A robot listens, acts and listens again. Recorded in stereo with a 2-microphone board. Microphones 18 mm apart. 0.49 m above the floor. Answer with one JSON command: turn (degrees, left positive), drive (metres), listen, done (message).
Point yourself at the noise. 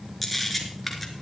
{"turn": 30}
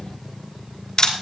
{"turn": 150}
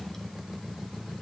{"listen": true}
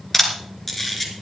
{"turn": 15}
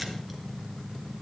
{"listen": true}
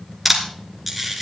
{"done": "Facing the camera shutter, 2 to 4 m away."}